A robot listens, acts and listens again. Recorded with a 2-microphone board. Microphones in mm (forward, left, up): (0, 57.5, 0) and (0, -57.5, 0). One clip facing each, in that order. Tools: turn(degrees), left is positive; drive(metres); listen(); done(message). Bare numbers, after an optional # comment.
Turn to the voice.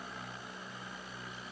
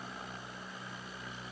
listen()
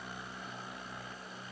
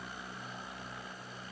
listen()
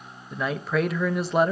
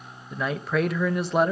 turn(30)
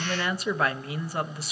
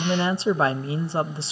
# So it is at 30° right.
turn(-30)
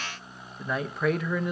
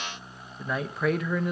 done("Found it: a man speaking, straight ahead.")